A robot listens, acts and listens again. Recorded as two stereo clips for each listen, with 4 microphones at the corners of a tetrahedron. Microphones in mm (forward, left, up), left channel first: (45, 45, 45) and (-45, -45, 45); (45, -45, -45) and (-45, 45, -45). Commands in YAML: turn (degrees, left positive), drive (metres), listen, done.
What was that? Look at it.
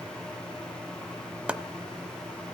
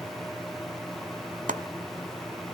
turn: 145
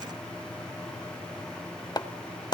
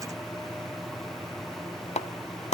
turn: -10
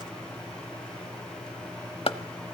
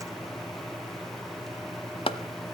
done: "Found it: chopping, straight ahead, under 1 m away."